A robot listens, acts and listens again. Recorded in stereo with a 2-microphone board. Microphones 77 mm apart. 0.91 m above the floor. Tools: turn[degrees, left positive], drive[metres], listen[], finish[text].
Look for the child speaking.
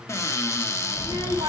Thought: The child speaking: about 70° right or 110° right.
Action: turn[-70]
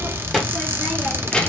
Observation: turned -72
Thought: So it is at 15° left.
Action: turn[15]
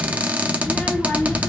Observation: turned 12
Thought: The child speaking is now 25° left.
Action: turn[25]
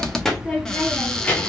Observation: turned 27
Thought: The child speaking is now 20° left.
Action: turn[20]
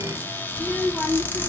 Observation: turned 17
Action: finish[Found it: a child speaking, straight ahead.]